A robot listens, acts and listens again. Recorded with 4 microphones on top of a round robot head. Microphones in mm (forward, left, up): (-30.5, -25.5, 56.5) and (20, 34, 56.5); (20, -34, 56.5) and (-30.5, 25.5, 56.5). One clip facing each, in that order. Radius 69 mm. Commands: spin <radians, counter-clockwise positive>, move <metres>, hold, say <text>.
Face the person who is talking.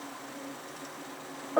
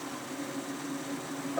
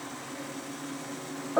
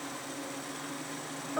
hold
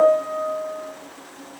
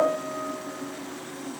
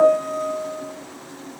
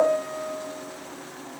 hold
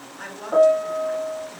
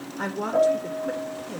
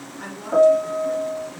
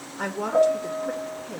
spin 1.66
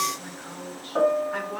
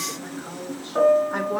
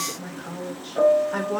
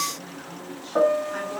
spin -0.26
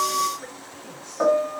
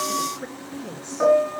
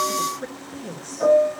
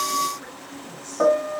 spin -0.17
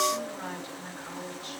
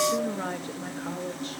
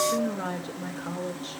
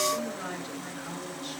say Found it: a woman speaking, straight ahead, 2 to 4 m away.